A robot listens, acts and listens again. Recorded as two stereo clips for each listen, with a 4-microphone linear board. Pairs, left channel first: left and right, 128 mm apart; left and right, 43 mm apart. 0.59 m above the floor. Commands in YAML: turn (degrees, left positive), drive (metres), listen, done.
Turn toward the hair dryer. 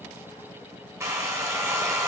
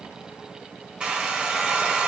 turn: -25
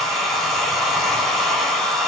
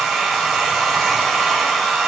done: "Facing the hair dryer."